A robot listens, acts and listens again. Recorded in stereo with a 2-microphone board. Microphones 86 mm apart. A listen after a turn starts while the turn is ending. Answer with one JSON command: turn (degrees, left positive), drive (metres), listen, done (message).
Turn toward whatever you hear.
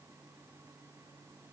{"listen": true}
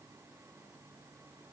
{"listen": true}
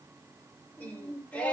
{"turn": 30}
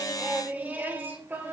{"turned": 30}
{"turn": -25}
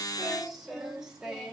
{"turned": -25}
{"turn": -10}
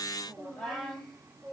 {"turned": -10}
{"done": "Facing the singing."}